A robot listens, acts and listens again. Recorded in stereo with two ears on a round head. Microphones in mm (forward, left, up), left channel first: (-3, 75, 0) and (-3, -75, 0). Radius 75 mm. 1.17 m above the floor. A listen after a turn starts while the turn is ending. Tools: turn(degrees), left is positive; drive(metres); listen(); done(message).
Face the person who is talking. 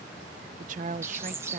turn(degrees=-50)
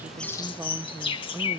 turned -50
turn(degrees=-15)
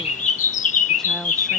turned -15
listen()
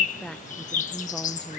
done("Found it: a woman speaking, straight ahead.")